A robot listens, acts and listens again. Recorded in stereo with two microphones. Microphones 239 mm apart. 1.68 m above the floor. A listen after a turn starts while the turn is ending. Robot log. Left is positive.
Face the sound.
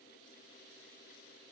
cmd idle
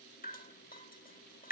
note: The dripping: about 35° left or 145° left.
cmd yaw +35
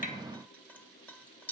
note: So it is at 10° left.
cmd yaw +10
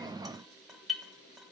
end: Facing the dripping, 1 to 2 m away.